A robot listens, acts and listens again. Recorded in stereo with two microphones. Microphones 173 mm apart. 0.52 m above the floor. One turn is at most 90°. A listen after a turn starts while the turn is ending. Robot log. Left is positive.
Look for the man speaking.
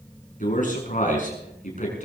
note: The man speaking: about 45° left or 135° left.
cmd yaw +45
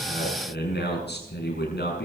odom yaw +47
note: So it is at 80° left.
cmd yaw +80
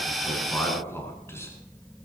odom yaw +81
note: The man speaking is now 15° left.
cmd yaw +15
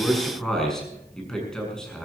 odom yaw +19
end: Found it: a man speaking, straight ahead.